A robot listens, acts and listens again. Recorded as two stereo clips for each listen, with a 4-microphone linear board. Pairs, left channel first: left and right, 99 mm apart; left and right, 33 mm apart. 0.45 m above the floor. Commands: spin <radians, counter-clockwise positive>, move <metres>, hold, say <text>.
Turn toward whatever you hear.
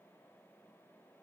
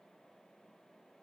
hold
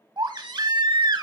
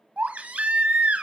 spin -0.87
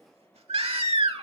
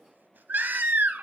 spin -1.40
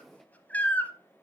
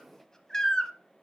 spin 0.35
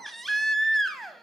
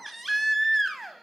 say Found it: a baby crying, straight ahead.